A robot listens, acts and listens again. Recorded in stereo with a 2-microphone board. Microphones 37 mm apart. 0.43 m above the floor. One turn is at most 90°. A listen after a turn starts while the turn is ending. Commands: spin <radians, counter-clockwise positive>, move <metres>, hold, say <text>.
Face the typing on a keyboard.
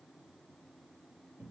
hold
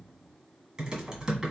spin -0.35
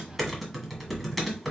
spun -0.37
say Found it: typing on a keyboard, straight ahead.